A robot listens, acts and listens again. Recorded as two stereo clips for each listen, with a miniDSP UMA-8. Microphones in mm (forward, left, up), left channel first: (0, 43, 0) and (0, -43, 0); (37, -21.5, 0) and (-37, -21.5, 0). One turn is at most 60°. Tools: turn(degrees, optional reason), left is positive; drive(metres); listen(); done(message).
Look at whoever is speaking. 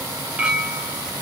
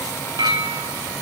listen()
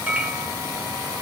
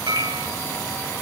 listen()
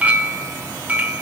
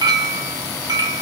done("I can't make out anyone speaking to turn to.")